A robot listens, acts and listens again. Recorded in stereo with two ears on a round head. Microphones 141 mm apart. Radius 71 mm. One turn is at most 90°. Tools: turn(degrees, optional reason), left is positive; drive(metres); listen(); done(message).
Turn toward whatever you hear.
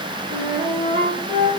turn(degrees=-25, reason="The flute: about 25° right or 155° right.")
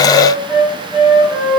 done("Found it: a flute, straight ahead.")